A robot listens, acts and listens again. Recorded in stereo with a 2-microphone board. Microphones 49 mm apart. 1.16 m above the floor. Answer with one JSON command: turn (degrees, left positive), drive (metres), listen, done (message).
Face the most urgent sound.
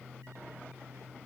{"listen": true}
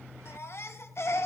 {"turn": 65}
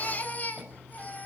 {"turn": 40}
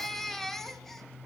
{"turn": 10}
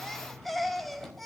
{"done": "Found it: a baby crying, straight ahead, 1 to 2 m away."}